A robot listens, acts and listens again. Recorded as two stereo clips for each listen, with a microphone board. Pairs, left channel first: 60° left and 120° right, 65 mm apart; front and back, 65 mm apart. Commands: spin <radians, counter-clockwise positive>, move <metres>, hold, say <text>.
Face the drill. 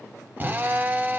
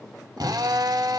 spin 3.14
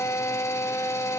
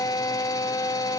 spin 0.35
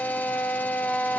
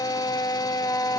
say Facing the drill.